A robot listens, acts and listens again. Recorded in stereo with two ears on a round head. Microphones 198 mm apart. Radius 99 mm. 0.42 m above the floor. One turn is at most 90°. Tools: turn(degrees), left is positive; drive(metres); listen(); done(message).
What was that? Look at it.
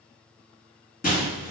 turn(degrees=45)
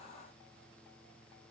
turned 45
listen()
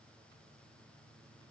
done("I heard breaking glass, but can't make it out now. It was about straight ahead or 90° left.")